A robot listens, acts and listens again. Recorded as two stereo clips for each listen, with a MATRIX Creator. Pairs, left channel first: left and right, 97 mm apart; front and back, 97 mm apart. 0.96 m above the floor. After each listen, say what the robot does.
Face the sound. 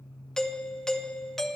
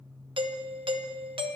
Turn 175° left.
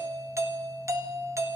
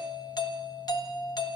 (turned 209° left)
Turn 35° right.
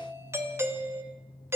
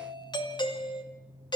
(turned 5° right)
Turn 30° right.
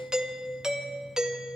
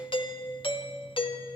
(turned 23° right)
Turn 10° right.
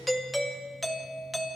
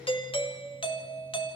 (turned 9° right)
Facing the doorbell.